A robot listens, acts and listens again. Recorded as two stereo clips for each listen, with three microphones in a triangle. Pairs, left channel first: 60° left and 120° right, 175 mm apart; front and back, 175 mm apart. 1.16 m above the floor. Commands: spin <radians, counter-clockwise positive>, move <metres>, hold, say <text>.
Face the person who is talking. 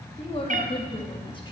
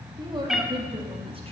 spin 2.09
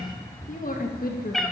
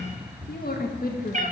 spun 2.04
spin 0.61
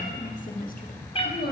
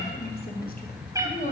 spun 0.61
spin 0.79
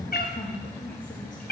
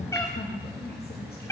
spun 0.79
spin 0.35
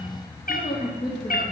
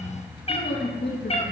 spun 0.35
say Facing the woman speaking.